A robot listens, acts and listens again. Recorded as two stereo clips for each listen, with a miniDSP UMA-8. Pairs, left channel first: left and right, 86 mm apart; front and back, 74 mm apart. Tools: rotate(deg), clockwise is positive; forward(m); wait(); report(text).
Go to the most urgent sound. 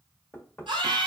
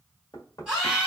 rotate(105)
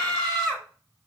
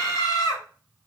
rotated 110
forward(1.0)
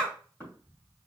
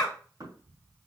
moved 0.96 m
rotate(-10)
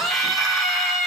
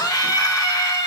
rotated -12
forward(1.0)
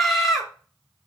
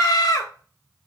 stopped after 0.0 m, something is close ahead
report("Arrived at the scream, straight ahead.")